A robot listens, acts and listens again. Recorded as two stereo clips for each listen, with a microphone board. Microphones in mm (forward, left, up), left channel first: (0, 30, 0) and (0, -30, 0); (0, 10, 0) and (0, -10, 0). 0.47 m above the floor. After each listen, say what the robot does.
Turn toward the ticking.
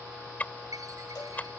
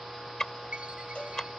Turn 25° left.
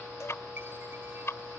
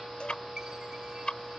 Turn 125° left.
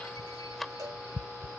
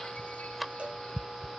Facing the ticking.